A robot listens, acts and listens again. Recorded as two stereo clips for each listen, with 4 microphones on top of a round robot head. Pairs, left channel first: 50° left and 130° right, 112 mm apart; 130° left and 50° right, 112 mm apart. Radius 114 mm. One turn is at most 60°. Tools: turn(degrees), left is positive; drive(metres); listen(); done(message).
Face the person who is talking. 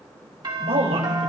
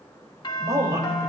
turn(degrees=-60)
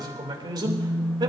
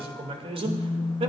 turn(degrees=-60)
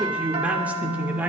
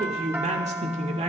turn(degrees=-55)
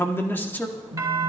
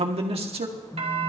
turn(degrees=-25)
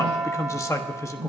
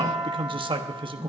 turn(degrees=-10)
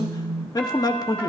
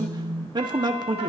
done("Found it: a man speaking, straight ahead, 1 to 2 m away.")